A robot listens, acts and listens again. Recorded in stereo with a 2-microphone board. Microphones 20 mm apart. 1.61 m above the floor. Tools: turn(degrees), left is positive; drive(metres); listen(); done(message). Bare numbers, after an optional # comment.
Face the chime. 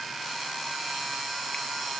listen()
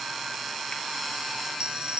# The chime: about 60° right or 120° right.
turn(-60)
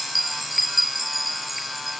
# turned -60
done("Facing the chime.")